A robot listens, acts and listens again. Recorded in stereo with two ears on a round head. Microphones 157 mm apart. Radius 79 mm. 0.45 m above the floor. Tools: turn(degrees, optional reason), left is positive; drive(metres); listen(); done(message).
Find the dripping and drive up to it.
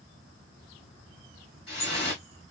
turn(degrees=30, reason="The dripping: about 30° left or 150° left.")
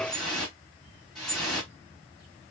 drive(metres=1.0)
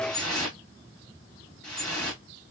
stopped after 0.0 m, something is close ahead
done("Blocked. The dripping is further on, straight ahead.")